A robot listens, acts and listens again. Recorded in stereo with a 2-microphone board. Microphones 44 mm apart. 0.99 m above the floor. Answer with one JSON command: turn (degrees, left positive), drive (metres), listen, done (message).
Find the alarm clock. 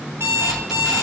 {"turn": -90}
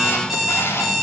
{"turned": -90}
{"done": "Found it: an alarm clock, straight ahead."}